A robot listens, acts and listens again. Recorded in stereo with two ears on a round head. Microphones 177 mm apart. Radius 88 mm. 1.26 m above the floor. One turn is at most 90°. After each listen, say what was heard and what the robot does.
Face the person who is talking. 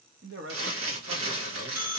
The man speaking: about 60° right or 120° right. Turn 60° right.
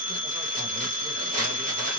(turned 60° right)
Keep listening.
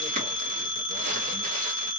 Keep listening.
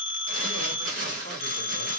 I heard a man speaking, but can't make it out now. It was about straight ahead or 60° right.